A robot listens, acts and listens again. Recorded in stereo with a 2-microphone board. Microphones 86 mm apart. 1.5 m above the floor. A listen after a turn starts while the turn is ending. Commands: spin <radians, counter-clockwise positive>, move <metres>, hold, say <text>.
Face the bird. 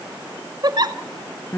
hold
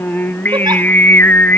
hold
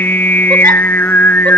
say I can't make out a bird, only a giggle and singing.